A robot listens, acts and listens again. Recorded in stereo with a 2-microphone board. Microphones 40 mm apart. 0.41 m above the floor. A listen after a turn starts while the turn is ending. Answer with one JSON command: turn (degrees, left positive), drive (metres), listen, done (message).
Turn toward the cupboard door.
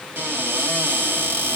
{"turn": -60}
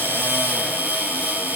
{"turn": -55}
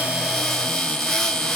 {"turn": 10}
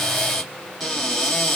{"done": "Found it: a cupboard door, straight ahead, 2 to 4 m away."}